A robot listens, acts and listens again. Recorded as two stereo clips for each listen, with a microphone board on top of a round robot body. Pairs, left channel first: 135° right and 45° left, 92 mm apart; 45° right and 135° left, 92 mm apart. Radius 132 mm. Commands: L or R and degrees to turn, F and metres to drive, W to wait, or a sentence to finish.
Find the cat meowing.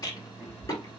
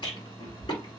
R30
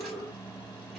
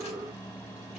W
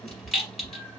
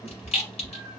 R15
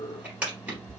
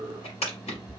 R15
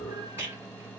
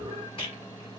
W
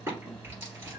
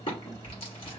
R15
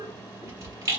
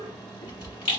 R15
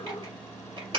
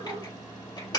W
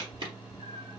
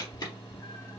Found it: a cat meowing, straight ahead.